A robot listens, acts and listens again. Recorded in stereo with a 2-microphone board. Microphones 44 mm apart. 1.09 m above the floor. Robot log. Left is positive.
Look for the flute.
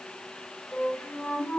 note: The flute: about 35° left or 145° left.
cmd yaw +35
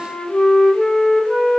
end: Found it: a flute, straight ahead, 1 to 2 m away.